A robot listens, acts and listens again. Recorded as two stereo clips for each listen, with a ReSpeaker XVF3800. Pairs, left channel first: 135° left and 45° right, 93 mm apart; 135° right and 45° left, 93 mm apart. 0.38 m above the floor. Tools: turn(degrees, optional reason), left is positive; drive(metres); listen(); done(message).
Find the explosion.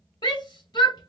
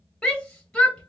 listen()
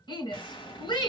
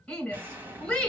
turn(degrees=115, reason="The explosion: 115° left.")
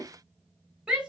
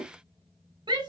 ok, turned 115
done("I heard an explosion from this way, but can't make it out now.")